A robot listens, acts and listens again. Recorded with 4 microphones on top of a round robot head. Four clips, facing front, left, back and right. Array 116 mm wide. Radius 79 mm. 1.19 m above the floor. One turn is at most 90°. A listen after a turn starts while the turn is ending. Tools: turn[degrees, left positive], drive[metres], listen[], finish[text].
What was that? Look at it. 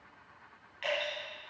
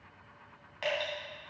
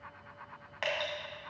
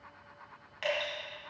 Thought: The dripping: 165° left.
Action: turn[90]
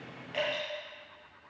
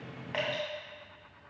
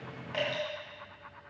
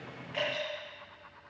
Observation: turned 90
Thought: The dripping is now 110° left.
Action: turn[90]
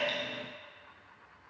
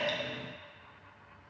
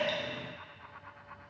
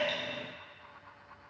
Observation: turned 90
Thought: The dripping is now 50° left.
Action: turn[50]
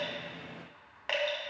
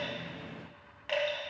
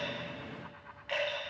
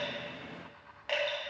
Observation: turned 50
Thought: The dripping is now 10° right.
Action: turn[-10]
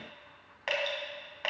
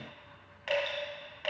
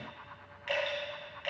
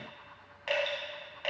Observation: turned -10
Action: finish[Facing the dripping, 2 to 4 m away.]